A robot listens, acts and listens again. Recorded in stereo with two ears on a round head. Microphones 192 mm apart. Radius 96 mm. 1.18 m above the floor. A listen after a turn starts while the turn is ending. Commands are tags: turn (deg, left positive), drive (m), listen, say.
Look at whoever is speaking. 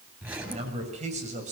<turn deg="-35"/>
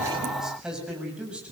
<say>Found it: a man speaking, straight ahead.</say>